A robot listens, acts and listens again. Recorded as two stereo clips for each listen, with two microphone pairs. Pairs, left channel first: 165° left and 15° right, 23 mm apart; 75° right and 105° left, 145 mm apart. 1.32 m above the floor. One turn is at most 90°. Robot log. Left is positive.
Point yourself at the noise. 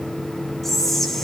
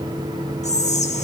note: The whispering: 110° right.
cmd yaw -90
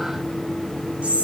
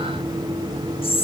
note: The whispering is now 30° right.
cmd yaw -30
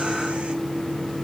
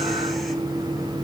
cmd idle
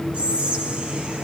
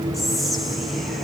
note: The whispering is now 15° left.
cmd yaw +15
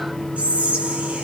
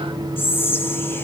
end: Found it: whispering, straight ahead, 1 to 2 m away.